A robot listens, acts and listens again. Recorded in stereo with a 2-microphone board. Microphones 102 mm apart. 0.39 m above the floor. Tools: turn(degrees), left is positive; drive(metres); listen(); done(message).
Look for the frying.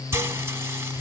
turn(degrees=-25)
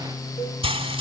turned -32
turn(degrees=-120)
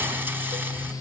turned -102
turn(degrees=-20)
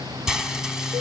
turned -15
done("Found it: frying, straight ahead.")